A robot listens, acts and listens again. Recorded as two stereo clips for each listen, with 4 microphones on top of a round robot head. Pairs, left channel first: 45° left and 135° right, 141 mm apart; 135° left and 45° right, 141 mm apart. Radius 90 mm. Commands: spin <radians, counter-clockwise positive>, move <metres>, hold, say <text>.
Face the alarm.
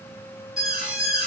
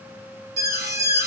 spin -0.79
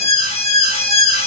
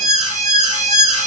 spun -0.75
say Found it: an alarm, straight ahead.